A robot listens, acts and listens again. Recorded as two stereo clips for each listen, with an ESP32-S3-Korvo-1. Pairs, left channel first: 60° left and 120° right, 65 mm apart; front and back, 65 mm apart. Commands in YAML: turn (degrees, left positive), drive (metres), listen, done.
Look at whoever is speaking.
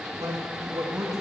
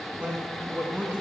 turn: -110
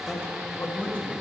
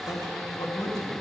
done: "Facing the man speaking."